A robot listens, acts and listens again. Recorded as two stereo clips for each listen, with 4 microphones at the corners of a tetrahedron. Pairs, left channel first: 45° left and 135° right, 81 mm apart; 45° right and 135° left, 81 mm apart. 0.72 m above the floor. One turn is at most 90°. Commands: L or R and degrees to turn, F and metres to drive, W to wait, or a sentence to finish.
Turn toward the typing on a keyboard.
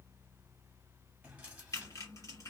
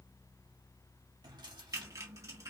L90
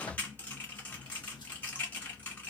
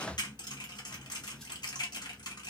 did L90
R25
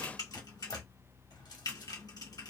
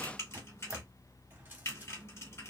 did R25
L10
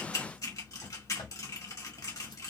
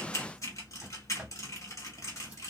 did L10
Facing the typing on a keyboard.